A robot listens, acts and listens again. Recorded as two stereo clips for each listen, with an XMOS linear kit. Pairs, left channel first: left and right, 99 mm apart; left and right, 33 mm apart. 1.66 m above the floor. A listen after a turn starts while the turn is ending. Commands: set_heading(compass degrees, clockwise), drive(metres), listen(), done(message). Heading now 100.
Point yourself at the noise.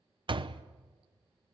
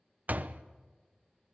set_heading(150)
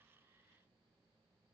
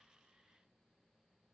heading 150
listen()
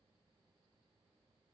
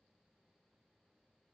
done("I heard a door slam, but can't make it out now. It was about straight ahead or 80° right.")